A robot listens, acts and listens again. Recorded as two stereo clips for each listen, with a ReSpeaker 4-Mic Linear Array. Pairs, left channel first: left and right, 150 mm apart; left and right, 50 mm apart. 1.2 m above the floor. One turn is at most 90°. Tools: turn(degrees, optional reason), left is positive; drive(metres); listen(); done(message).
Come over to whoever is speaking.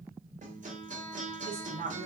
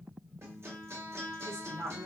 turn(degrees=-90)
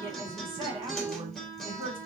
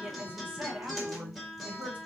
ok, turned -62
turn(degrees=-35, reason="So it is at 35° right.")
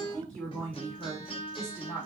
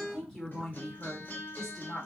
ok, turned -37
drive(metres=1.0)
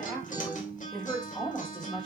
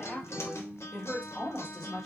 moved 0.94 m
drive(metres=1.0)
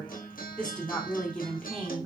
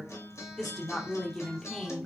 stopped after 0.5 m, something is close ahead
done("Arrived at the woman speaking, straight ahead.")